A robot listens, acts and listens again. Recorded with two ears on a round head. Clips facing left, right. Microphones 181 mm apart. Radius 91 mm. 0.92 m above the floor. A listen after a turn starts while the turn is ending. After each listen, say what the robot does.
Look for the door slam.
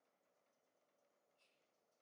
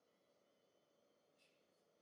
Keep listening.
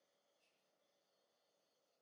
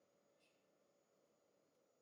Keep listening.
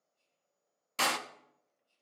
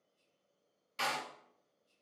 Turn 65° left.
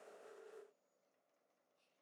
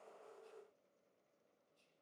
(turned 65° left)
Keep listening.
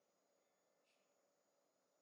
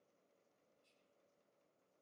I heard a door slam, but can't make it out now. It was about straight ahead or 50° left.